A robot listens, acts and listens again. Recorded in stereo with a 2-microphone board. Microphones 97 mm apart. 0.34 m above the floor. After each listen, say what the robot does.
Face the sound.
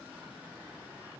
Keep listening.
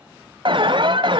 Turn 55° right.
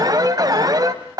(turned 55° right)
Turn 50° right.
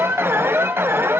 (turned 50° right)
Turn 30° right.
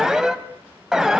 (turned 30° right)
Facing the alarm.